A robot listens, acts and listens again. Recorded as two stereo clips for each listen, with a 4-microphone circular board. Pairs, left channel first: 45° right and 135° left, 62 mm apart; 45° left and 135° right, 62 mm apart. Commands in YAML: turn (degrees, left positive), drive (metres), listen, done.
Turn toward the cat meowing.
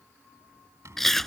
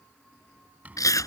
listen: true
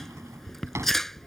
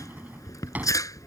listen: true
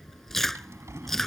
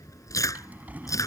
done: "I can't make out a cat meowing, only a drawer and chewing."